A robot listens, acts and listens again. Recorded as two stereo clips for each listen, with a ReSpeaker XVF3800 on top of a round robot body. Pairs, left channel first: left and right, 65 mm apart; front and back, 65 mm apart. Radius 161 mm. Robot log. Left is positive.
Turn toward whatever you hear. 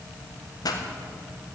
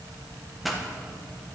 note: The pop: 90° left.
cmd yaw +90
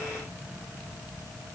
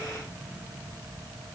end: Facing where the pop came from. I can't hear it now.